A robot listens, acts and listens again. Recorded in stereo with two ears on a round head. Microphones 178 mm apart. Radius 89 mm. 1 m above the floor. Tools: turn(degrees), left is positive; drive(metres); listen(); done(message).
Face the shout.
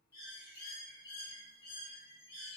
listen()
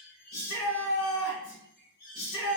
turn(degrees=65)
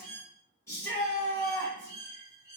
turn(degrees=15)
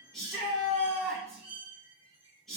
done("Facing the shout, 2 to 4 m away.")